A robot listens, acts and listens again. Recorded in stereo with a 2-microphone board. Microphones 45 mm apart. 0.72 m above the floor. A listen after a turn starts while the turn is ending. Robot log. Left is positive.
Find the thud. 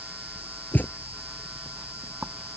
note: The thud: about 40° left or 140° left.
cmd yaw +40
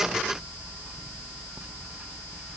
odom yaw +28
cmd idle
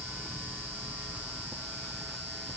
end: I heard a thud, but can't make it out now. It was about 10° left or 115° left.